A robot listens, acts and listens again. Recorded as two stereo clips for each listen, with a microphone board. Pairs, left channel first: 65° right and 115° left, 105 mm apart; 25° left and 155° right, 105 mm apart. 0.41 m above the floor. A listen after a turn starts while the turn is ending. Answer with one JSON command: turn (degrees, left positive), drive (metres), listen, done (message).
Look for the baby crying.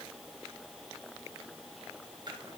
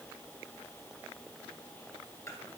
{"listen": true}
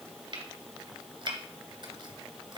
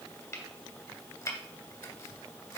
{"listen": true}
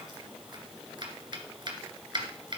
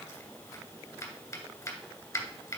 {"done": "I can't make out a baby crying to turn to."}